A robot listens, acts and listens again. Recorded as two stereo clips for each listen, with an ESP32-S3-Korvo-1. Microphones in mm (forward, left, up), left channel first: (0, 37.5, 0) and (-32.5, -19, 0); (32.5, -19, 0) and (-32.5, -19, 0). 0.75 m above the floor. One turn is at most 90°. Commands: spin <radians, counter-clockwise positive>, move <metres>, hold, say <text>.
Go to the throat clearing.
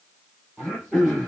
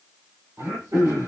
spin 1.57
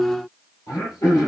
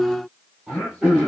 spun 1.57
spin 1.57
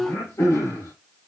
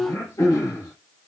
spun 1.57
spin 0.44
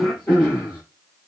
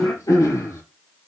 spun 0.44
move 1.0
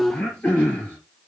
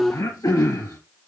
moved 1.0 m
spin -0.17
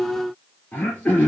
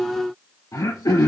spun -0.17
move 1.0
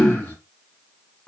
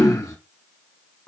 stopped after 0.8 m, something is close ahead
say Arrived at the throat clearing, straight ahead.